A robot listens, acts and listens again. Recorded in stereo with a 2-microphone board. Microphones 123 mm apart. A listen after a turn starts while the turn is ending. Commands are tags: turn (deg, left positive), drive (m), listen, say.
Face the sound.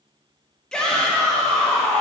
<turn deg="30"/>
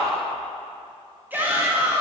<turn deg="-20"/>
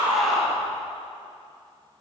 <say>Found it: a shout, straight ahead.</say>